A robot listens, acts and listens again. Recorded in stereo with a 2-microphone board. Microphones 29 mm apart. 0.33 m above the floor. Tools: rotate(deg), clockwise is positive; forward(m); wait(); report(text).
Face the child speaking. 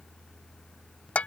wait()
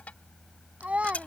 rotate(55)
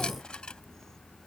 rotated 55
wait()
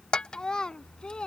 rotate(-35)
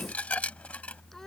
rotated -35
wait()
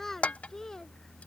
rotate(-15)
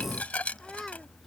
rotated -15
report("Found it: a child speaking, straight ahead.")